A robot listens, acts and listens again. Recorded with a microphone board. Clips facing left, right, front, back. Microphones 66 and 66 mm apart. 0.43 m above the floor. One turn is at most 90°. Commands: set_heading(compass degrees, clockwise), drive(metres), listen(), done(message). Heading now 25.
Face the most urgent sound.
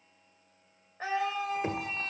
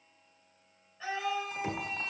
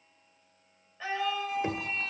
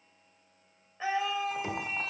set_heading(295)
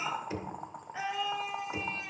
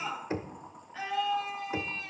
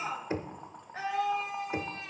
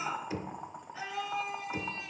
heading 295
set_heading(275)
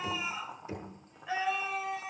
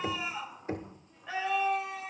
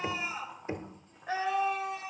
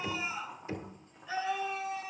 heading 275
done("Facing the scream.")